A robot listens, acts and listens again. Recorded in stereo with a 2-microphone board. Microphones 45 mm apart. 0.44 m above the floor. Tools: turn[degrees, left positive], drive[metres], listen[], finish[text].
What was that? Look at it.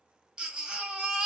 Thought: The baby crying: about 20° right or 160° right.
Action: turn[-20]
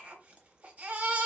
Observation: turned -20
Thought: So it is at 140° right.
Action: turn[-140]
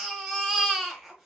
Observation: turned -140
Action: finish[Found it: a baby crying, straight ahead.]